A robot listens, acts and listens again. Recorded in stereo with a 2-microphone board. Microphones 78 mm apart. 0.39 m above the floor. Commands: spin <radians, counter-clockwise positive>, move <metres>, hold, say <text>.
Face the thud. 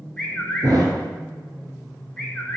spin -1.05
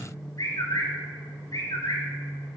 hold
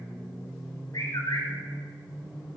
say I heard a thud, but can't make it out now. It was about straight ahead or 60° right.